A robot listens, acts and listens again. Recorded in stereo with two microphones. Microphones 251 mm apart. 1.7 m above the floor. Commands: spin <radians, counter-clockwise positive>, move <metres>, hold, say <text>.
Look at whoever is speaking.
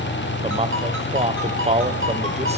spin -0.44
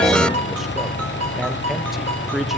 hold
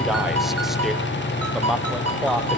say Found it: a man speaking, straight ahead, 1 to 2 m away.